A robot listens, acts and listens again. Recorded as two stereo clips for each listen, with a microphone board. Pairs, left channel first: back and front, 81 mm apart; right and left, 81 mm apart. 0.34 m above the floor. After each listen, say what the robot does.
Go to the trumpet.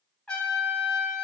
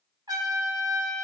Turn 100° left.
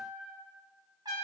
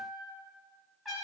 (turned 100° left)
Drive 1.0 m forward.
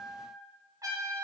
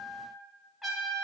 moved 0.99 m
Drive 1.0 m forward.
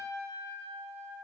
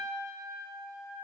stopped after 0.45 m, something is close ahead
I am next to the trumpet.